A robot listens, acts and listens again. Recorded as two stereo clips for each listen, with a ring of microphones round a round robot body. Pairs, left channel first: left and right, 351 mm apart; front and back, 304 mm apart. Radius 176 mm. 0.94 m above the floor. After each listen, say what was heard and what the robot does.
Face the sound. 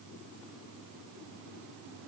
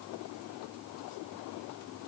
Keep listening.
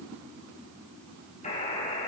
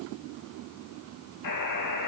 The buzzer: 20° left. Turn 20° left.
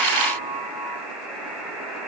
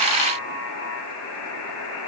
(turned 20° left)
Facing the buzzer, over 4 m away.